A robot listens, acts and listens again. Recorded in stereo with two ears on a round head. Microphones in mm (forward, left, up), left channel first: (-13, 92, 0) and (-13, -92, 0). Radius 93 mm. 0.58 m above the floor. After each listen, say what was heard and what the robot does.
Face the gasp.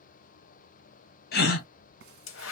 The gasp: about 45° left or 135° left. Turn 45° left.
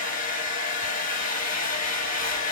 Keep listening.
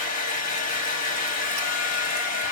I heard a gasp, but can't make it out now. It was about straight ahead or 90° left.